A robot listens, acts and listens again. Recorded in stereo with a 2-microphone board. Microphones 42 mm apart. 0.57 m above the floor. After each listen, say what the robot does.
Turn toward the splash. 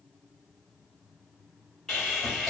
Keep listening.
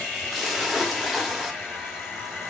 Turn 30° right.
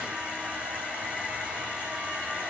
Keep listening.
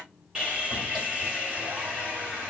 I heard a splash, but can't make it out now. It was about 25° left or 145° right.